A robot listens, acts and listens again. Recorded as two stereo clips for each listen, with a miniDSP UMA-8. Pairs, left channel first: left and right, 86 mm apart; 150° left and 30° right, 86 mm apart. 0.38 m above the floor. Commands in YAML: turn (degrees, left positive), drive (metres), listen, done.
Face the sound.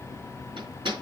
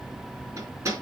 turn: -85
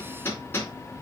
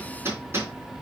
turn: 30
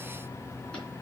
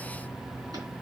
listen: true
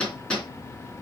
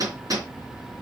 turn: 15
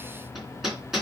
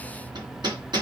done: "Facing the hammering."